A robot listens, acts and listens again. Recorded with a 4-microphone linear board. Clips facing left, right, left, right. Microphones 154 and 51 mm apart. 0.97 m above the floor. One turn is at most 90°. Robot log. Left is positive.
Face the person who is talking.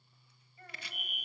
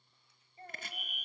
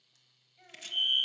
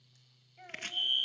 note: The child speaking: about 30° right or 150° right.
cmd yaw -30
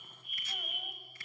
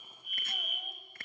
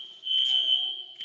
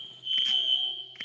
cmd idle
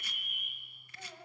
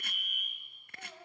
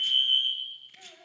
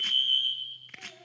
end: Found it: a child speaking, straight ahead, 2 to 4 m away.